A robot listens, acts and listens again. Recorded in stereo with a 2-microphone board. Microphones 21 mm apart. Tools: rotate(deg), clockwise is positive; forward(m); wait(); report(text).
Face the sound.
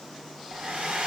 rotate(70)
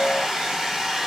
rotate(20)
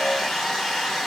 report("Facing the hair dryer, 1 to 2 m away.")